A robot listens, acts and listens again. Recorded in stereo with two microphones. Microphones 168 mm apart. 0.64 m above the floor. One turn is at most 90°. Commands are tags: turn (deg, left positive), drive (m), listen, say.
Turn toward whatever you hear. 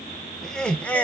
<turn deg="30"/>
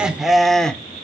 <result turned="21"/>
<turn deg="30"/>
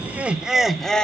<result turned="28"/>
<turn deg="30"/>
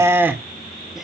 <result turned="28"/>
<turn deg="-10"/>
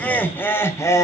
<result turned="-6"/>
<turn deg="20"/>
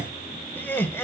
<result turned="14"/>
<turn deg="15"/>
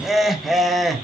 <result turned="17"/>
<say>Facing the laughter.</say>